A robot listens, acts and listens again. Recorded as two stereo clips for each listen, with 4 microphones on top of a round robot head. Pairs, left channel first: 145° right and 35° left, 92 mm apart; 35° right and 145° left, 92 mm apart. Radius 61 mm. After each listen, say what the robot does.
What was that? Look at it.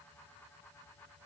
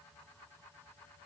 Keep listening.
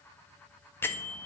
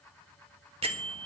Turn 150° left.
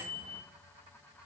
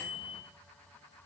Facing the bell.